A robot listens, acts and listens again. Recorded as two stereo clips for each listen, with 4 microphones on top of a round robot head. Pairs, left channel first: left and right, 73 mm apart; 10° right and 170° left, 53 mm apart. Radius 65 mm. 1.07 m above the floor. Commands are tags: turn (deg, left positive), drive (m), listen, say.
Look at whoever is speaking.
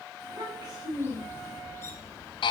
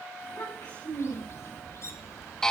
<turn deg="-50"/>
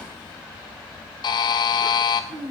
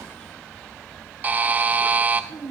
<turn deg="-10"/>
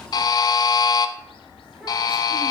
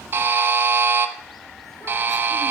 <listen/>
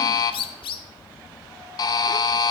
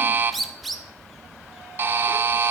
<listen/>
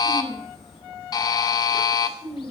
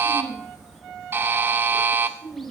<say>Found it: a child speaking, straight ahead, over 4 m away.</say>